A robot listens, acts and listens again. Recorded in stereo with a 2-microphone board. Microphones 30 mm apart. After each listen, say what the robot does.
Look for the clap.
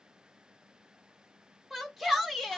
Keep listening.
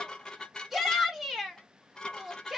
Keep listening.
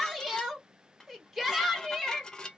I can't make out a clap to turn to.